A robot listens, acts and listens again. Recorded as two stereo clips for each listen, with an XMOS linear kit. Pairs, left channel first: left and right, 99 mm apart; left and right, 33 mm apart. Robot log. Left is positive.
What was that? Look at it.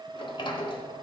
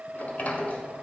note: The sliding door: about 60° left or 120° left.
cmd yaw +60
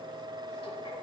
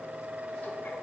cmd idle
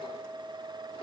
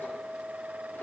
cmd idle
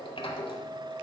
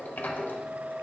note: So it is at 65° left.
cmd yaw +65
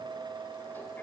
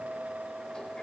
cmd idle
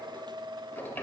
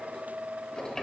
note: The sliding door is now 20° left.
cmd yaw +20
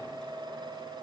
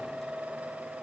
cmd idle
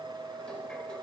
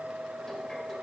cmd idle
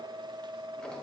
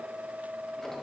end: I heard a sliding door from this way, but can't make it out now.